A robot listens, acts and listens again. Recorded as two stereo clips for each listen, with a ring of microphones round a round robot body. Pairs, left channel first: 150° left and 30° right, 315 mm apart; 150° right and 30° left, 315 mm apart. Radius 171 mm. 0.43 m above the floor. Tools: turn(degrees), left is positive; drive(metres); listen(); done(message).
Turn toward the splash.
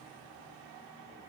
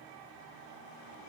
listen()
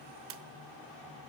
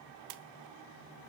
turn(degrees=15)
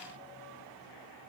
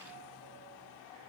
done("Facing where the splash came from. I can't hear it now.")